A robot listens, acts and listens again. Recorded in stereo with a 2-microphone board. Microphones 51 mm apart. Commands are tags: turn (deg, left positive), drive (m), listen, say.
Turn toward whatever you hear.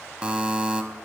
<turn deg="-20"/>
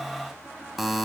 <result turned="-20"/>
<say>Facing the buzzer.</say>